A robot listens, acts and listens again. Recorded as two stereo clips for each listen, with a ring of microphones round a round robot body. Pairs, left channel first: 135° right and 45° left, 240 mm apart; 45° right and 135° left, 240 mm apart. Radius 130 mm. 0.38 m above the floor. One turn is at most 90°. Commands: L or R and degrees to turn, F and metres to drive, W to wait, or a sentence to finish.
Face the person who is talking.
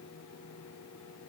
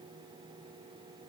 W
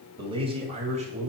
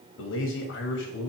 R10
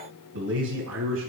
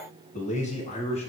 L20
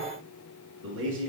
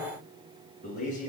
L10
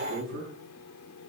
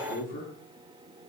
L10
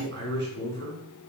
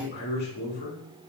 Facing the man speaking, over 4 m away.